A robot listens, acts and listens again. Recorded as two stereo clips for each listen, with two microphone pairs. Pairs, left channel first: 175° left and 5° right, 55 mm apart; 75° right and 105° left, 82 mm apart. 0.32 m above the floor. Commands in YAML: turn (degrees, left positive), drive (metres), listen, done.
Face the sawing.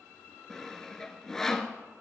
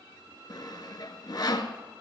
turn: -110
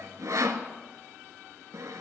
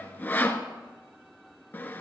done: "Facing the sawing, under 1 m away."